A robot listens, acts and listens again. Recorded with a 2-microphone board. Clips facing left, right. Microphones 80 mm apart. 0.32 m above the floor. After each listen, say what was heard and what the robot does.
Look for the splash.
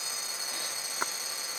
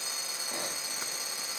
The splash: about 45° left or 135° left. Turn 45° left.
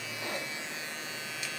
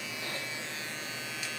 Keep listening.
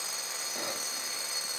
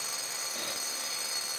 I heard a splash, but can't make it out now. It was about straight ahead or 90° left.